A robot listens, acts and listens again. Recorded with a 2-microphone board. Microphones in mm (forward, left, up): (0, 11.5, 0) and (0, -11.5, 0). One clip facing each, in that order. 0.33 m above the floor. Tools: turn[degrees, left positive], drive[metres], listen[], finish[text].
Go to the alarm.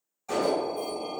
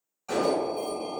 Thought: The alarm: about 40° right or 140° right.
Action: turn[-40]
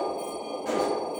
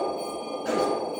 Thought: So it is at 95° right.
Action: turn[-95]
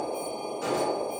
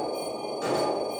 Action: drive[1.0]
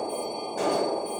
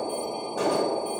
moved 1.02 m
Action: drive[1.0]
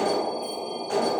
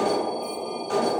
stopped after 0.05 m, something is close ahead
Action: finish[Arrived at the alarm, straight ahead.]